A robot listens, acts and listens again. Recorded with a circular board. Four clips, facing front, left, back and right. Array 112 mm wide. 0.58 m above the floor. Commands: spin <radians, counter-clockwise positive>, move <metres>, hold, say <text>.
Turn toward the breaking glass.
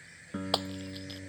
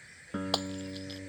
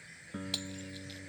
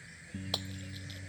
spin 0.61
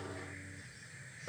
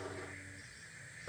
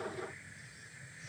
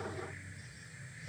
say I heard breaking glass from this way, but can't make it out now.